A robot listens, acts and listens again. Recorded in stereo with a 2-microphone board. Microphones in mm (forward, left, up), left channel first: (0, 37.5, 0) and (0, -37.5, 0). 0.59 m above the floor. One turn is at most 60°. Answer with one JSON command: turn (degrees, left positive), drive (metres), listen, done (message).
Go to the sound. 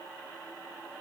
{"listen": true}
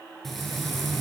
{"turn": 30}
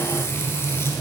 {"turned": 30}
{"turn": 60}
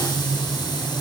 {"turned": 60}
{"turn": 60}
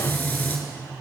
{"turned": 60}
{"turn": 25}
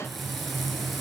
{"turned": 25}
{"drive": 1.0}
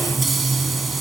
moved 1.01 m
{"drive": 1.0}
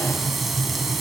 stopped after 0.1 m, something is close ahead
{"done": "I am next to the frying."}